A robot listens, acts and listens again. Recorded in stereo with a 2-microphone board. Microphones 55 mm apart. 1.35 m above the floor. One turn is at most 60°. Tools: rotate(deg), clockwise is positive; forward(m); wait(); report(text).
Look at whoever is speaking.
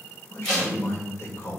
rotate(-45)
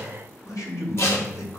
rotate(-60)
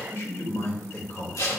rotate(-55)
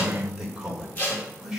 rotate(10)
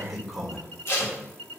report("Found it: a man speaking, straight ahead.")